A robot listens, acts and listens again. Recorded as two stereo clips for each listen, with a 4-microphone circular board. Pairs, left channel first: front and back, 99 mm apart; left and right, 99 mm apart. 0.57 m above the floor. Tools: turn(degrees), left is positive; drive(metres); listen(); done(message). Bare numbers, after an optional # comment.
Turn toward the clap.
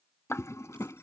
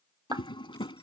# The clap: 60° right.
turn(-60)
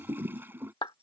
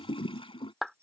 done("Facing the clap.")